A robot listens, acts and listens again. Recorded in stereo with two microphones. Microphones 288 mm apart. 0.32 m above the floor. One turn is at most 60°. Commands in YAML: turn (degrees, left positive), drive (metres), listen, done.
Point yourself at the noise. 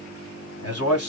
turn: 55
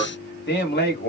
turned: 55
turn: 35
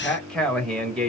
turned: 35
done: "Found it: a man speaking, straight ahead, 1 to 2 m away."